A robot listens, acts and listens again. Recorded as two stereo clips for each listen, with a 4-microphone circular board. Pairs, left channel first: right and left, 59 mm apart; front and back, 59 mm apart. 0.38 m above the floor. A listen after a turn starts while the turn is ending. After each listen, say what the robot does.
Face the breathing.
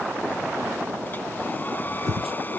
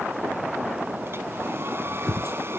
Turn 75° left.
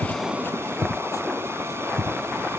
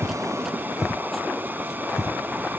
Turn 15° right.
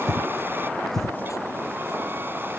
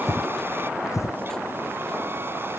Found it: breathing, straight ahead.